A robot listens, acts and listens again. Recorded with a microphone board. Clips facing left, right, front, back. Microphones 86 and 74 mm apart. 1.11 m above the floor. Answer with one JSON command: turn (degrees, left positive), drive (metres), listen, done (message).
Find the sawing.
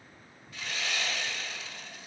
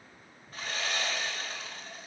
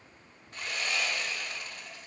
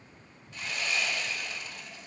{"turn": -40}
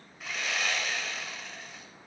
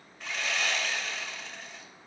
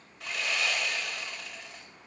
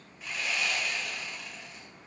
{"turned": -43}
{"done": "Facing the sawing, 2 to 4 m away."}